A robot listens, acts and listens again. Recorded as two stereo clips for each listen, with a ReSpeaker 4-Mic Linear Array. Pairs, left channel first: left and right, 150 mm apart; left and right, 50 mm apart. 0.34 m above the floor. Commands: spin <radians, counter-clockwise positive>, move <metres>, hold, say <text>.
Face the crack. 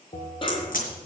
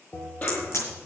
spin 1.13
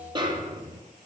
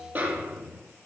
hold
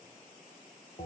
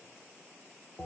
say I heard a crack, but can't make it out now. It was about straight ahead or 50° left.